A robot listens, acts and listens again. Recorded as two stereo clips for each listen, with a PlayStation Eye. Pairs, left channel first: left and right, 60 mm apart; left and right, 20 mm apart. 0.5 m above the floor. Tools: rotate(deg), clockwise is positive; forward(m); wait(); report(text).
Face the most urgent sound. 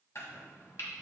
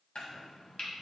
wait()
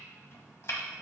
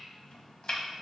wait()
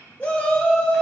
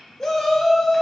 rotate(-20)
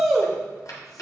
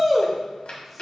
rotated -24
report("Found it: a shout, straight ahead, 1 to 2 m away.")